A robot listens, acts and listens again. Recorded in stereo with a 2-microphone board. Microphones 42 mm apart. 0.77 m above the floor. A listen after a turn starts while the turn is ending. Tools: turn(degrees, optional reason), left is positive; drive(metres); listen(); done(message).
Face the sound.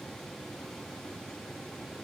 listen()
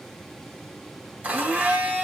turn(degrees=-35, reason="The blender: about 35° right or 145° right.")
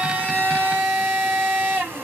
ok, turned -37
turn(degrees=-105, reason="So it is at 105° right.")
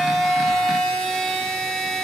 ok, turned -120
turn(degrees=15, reason="The blender is now 15° left.")
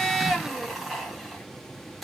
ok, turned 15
done("Facing the blender, under 1 m away.")